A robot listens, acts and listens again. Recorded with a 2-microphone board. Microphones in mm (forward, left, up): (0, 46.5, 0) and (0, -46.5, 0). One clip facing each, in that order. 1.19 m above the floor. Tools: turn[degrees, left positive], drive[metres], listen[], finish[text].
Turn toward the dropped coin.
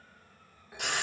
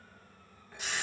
Action: listen[]
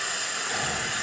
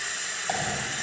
Action: turn[-90]
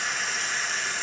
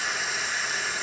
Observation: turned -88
Action: finish[Facing where the dropped coin came from. I can't hear it now.]